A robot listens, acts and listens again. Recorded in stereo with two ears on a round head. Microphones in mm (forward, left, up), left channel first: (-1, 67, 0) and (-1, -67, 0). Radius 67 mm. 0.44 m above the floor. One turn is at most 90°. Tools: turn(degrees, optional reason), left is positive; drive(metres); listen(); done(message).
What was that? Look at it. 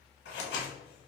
turn(degrees=90)
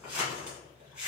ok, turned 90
turn(degrees=-10, reason="So it is at 10° right.")
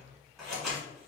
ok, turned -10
done("Facing the scissors.")